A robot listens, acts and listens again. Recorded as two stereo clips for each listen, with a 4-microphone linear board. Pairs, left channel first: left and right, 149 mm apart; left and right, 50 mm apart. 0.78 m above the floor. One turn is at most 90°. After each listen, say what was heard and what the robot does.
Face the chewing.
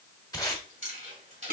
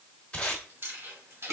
The chewing: about 55° right or 125° right. Turn 55° right.
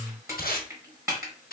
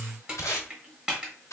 Keep listening.
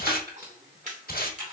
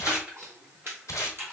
So it is at 60° right. Turn 60° right.
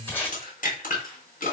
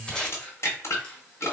The chewing is now 25° left. Turn 25° left.
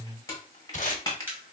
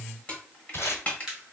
The chewing is now 15° right. Turn 15° right.
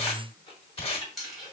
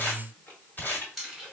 Facing the chewing.